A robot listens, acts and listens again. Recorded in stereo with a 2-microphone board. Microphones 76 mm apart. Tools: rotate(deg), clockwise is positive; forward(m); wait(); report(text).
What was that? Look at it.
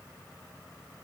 wait()
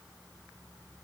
wait()
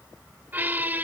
rotate(25)
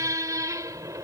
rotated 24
rotate(130)
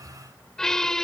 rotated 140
report("Found it: a squeak, straight ahead.")